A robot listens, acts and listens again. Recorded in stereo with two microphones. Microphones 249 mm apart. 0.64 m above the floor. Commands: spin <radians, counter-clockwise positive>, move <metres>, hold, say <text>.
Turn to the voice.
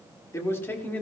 spin 0.52
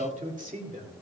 spin -0.61
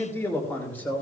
spin 0.17
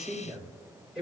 say Facing the man speaking, 2 to 4 m away.